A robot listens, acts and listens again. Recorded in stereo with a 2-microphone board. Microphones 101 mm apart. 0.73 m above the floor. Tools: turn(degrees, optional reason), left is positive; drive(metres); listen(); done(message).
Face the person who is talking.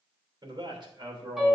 turn(degrees=-45, reason="The man speaking: about 45° right or 135° right.")
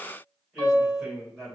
done("Facing the man speaking, 2 to 4 m away.")